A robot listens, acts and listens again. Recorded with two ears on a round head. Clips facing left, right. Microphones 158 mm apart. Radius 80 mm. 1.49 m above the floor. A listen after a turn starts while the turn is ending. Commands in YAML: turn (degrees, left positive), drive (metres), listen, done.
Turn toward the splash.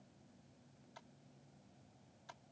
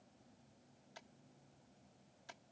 listen: true
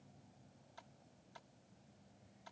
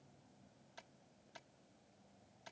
listen: true
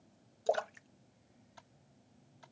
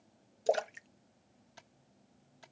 turn: -25
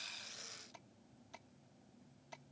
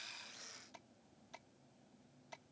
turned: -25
listen: true
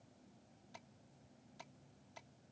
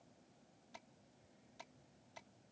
done: "I heard a splash, but can't make it out now. It was about straight ahead or 130° right."